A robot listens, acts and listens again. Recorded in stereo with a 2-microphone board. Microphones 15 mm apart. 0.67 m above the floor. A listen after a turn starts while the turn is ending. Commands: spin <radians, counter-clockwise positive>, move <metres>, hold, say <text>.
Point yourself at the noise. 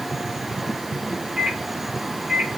spin -1.57
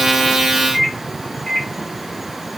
spin -0.26
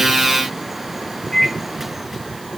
say Found it: a microwave, straight ahead, 2 to 4 m away.